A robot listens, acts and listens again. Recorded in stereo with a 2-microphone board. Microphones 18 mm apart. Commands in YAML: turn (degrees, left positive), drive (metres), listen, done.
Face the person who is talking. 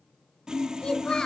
turn: 60
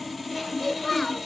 turn: 15
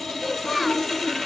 done: "Facing the child speaking."